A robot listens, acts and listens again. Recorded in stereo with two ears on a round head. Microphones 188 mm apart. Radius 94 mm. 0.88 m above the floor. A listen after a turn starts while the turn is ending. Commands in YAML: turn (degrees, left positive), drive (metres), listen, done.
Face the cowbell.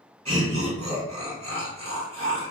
listen: true
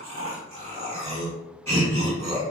listen: true
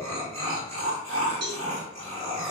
turn: -55
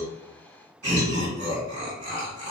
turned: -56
listen: true
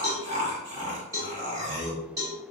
turn: -20
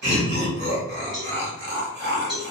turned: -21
done: "Facing the cowbell."